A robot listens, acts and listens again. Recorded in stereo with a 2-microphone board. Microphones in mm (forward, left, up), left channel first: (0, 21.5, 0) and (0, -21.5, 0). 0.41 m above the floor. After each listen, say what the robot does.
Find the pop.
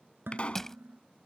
Turn 30° left.
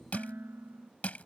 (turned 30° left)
Keep listening.
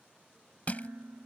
I heard a pop, but can't make it out now. It was about straight ahead or 120° left.